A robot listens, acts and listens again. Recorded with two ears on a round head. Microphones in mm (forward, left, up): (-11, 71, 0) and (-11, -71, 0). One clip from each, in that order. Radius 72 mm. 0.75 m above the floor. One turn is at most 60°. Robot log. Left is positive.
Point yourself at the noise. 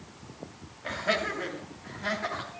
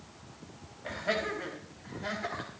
cmd yaw +30
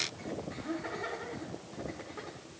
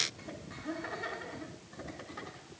note: So it is at 40° right.
cmd yaw -40
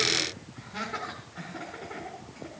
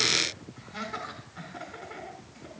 note: The laughter is now 10° right.
cmd yaw -10
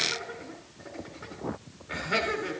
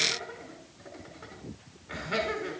end: Facing the laughter.